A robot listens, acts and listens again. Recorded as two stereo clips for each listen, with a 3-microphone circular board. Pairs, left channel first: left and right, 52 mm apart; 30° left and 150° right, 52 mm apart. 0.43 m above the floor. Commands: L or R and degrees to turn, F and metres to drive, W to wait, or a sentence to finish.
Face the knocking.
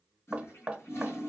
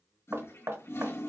R150
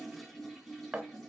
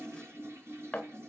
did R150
R35
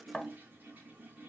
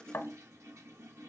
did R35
Found it: knocking, straight ahead, 1 to 2 m away.